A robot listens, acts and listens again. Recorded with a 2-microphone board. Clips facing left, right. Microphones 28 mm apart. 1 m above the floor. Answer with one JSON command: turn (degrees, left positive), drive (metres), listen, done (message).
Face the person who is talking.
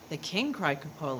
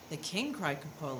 {"turn": 20}
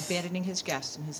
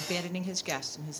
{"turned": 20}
{"done": "Found it: a woman speaking, straight ahead."}